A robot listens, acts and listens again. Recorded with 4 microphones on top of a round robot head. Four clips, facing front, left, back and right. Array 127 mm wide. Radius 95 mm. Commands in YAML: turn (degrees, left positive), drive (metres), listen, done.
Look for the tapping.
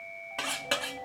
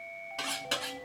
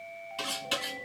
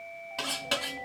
listen: true
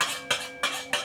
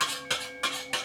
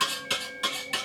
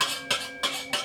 listen: true
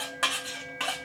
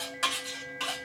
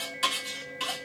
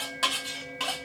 done: "I can't make out tapping, only cutlery clinking."